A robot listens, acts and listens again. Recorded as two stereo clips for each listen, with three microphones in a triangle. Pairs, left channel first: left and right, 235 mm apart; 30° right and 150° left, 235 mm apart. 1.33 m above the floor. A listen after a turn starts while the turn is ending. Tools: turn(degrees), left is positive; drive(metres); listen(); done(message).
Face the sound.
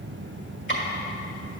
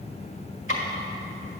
turn(degrees=125)
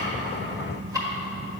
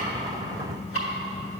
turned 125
turn(degrees=-15)
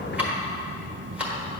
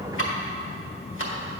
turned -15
done("Found it: ticking, straight ahead, 1 to 2 m away.")